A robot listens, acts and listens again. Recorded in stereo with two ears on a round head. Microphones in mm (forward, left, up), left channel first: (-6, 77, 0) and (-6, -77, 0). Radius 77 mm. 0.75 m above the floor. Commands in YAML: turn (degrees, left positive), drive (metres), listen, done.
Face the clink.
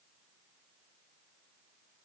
listen: true
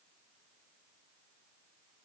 listen: true
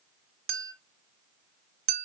turn: -60
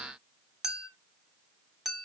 done: "Facing the clink, under 1 m away."